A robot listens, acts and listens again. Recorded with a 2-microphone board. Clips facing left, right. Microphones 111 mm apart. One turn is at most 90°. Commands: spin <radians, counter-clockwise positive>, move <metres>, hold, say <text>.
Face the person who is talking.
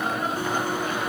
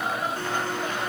hold
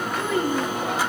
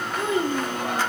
spin -0.35
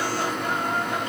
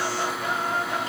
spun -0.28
hold
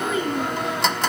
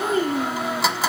spin -1.57
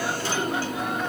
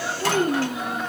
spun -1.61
spin -0.87
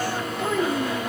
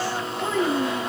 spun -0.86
say Found it: a child speaking, straight ahead, 2 to 4 m away.